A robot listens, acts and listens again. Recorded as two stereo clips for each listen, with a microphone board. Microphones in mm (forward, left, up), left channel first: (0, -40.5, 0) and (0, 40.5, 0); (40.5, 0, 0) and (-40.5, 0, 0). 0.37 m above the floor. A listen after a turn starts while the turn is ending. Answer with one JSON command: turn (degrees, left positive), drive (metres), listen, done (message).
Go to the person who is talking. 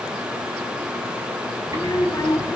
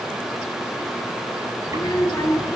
{"turn": -45}
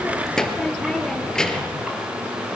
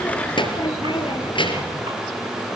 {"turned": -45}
{"turn": -10}
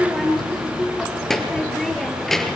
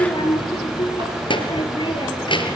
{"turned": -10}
{"drive": 1.0}
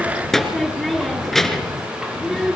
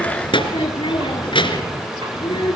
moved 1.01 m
{"drive": 1.0}
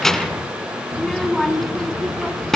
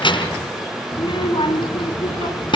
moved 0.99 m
{"drive": 1.0}
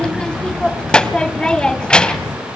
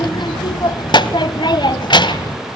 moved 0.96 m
{"turn": -10}
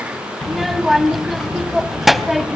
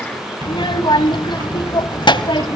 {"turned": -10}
{"drive": 1.0}
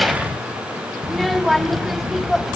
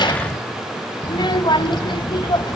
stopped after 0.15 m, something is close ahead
{"done": "Arrived at the child speaking, straight ahead."}